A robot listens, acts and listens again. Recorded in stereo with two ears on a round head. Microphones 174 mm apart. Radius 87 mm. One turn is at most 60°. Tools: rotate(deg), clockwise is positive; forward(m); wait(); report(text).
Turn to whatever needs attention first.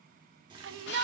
rotate(60)
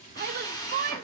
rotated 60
rotate(45)
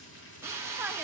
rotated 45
wait()
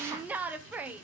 rotate(10)
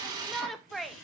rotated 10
report("Found it: a shout, straight ahead, under 1 m away.")